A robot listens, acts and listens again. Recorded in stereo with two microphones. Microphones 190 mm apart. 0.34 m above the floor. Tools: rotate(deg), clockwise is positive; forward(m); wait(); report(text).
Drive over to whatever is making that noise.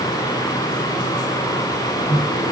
rotate(20)
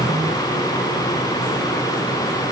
wait()
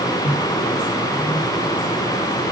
forward(1.0)
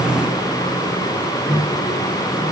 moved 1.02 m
forward(1.0)
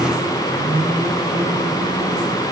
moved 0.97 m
forward(1.0)
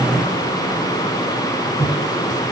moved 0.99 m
forward(1.0)
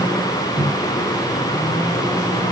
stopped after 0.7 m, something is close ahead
report("Arrived at the microwave, straight ahead.")